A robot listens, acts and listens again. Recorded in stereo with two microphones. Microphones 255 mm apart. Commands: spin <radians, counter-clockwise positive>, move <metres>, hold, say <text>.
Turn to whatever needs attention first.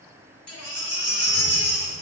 spin 1.22
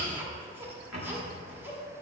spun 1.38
hold
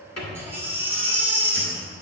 spin -0.17
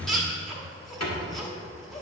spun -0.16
say Found it: a baby crying, straight ahead, 1 to 2 m away.